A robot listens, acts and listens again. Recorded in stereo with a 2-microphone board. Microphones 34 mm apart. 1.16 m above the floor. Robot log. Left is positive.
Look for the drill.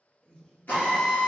note: The drill: about 60° left or 120° left.
cmd yaw +60
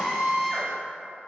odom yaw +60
end: Facing the drill, 1 to 2 m away.